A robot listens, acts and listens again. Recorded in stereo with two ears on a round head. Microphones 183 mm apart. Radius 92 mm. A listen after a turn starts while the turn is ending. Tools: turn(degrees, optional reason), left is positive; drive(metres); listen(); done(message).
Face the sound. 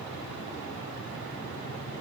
listen()
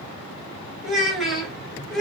turn(degrees=30)
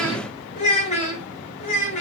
turn(degrees=145, reason="So it is at 145° left.")
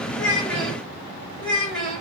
done("Facing the child speaking, over 4 m away.")